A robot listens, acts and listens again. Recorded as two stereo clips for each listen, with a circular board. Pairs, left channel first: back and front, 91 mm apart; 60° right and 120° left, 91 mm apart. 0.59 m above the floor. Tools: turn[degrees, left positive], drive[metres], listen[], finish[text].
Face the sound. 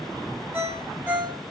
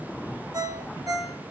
Thought: The ringtone: 65° left.
Action: turn[65]
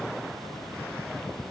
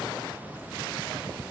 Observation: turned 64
Action: listen[]
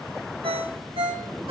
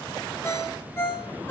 Action: finish[Found it: a ringtone, straight ahead.]